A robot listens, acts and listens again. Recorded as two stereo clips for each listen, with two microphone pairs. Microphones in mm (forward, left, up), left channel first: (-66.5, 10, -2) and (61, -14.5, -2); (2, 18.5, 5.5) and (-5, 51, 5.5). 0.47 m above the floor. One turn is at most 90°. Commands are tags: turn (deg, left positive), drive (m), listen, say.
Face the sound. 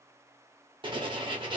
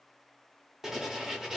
<turn deg="30"/>
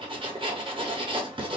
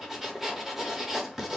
<turn deg="30"/>
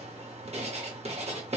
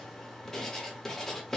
<say>Found it: writing, straight ahead.</say>